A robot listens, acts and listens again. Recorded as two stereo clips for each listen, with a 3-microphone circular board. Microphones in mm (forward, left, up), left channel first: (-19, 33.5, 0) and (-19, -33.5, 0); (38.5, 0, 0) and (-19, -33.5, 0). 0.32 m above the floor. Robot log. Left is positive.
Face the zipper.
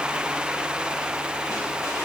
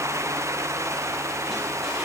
cmd idle
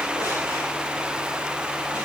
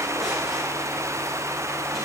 cmd idle
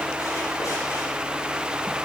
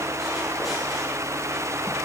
end: I can't make out a zipper.